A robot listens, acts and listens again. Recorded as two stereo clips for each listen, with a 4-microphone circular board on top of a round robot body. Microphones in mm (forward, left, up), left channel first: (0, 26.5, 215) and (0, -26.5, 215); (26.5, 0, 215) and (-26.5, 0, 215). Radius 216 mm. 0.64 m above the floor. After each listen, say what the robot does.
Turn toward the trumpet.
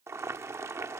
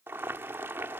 Keep listening.
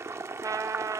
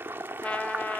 Turn 70° right.
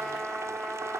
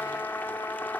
Found it: a trumpet, straight ahead, 1 to 2 m away.